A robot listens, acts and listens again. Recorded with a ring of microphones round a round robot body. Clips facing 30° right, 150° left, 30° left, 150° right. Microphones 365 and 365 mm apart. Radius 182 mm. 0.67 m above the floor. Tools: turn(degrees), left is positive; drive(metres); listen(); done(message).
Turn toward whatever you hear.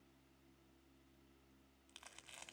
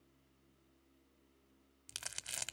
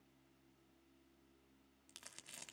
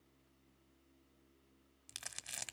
turn(degrees=140)
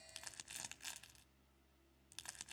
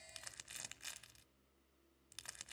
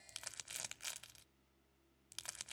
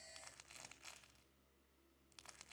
turn(degrees=55)
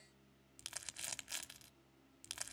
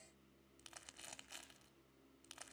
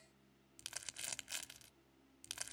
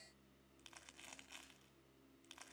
turn(degrees=15)
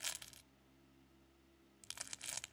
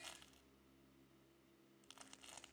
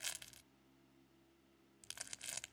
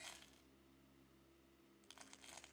done("Found it: crumpling, straight ahead, 1 to 2 m away.")